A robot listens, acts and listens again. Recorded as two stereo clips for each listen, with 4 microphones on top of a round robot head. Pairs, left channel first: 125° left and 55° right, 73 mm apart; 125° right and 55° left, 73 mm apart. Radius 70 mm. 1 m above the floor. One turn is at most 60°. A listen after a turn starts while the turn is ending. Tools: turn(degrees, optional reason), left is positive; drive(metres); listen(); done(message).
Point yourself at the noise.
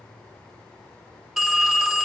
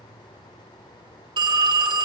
turn(degrees=35, reason="The phone ringing: 35° left.")
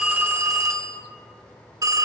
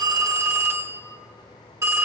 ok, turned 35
done("Found it: a phone ringing, straight ahead.")